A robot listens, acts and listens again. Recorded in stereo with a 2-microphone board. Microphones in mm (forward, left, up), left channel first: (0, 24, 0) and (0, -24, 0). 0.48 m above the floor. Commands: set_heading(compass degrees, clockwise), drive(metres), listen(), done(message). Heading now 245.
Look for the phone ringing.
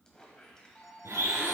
set_heading(215)
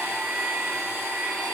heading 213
listen()
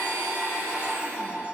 set_heading(243)
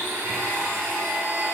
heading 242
listen()
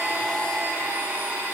listen()
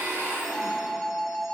done("Found it: a phone ringing, straight ahead, 1 to 2 m away.")